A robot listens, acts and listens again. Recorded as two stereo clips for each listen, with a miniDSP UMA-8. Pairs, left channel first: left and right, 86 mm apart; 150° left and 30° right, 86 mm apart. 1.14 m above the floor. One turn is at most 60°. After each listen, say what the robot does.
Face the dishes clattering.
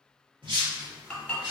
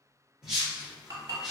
Turn 15° left.
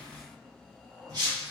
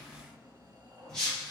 Keep listening.
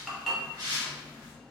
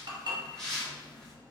Facing the dishes clattering, 1 to 2 m away.